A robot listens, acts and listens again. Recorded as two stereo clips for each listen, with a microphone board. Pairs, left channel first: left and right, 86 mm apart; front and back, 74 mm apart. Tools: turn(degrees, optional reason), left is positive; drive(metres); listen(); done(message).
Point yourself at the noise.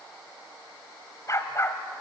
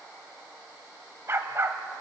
turn(degrees=140, reason="The dog barking: 140° left.")
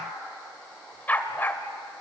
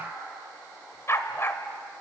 turn(degrees=40, reason="The dog barking is now 40° left.")
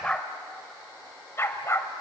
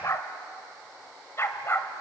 turn(degrees=45, reason="The dog barking is now 45° left.")
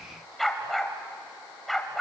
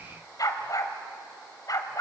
done("Facing the dog barking.")